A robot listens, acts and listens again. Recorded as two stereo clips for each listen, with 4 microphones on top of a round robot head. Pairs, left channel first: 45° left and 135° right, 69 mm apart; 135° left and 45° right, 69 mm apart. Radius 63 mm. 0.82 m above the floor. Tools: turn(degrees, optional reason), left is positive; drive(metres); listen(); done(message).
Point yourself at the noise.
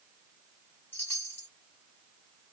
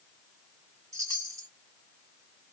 turn(degrees=-10, reason="The chime: 10° right.")
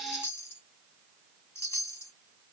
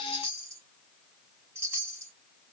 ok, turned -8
done("Facing the chime.")